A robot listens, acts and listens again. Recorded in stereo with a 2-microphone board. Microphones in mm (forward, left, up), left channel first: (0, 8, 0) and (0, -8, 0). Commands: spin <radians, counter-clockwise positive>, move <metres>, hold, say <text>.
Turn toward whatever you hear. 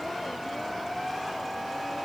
hold
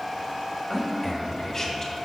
spin 0.52
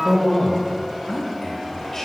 spin 0.52
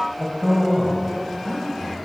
spin 0.26
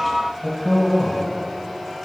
say Found it: a man speaking, straight ahead, 1 to 2 m away.